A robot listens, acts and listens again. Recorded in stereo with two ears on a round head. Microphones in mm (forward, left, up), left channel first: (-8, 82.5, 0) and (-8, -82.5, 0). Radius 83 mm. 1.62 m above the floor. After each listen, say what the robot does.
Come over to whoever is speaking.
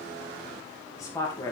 Turn 20° left.
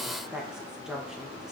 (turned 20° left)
Drive 1.0 m forward.
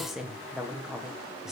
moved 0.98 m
Drive 1.0 m forward.
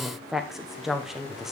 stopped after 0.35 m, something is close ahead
Arrived at the woman speaking, straight ahead.